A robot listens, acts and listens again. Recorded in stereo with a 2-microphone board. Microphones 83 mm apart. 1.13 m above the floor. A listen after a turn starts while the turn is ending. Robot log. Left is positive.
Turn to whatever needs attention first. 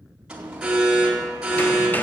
cmd yaw -30
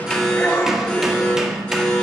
note: So it is at 20° left.
cmd yaw +20
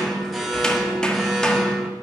end: Found it: an alarm, straight ahead, 2 to 4 m away.